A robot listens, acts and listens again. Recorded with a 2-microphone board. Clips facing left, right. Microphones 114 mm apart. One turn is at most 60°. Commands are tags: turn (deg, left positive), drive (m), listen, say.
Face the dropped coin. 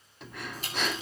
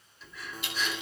<turn deg="40"/>
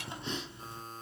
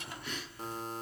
<listen/>
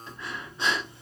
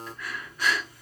<say>I heard a dropped coin, but can't make it out now. It was about straight ahead or 100° left.</say>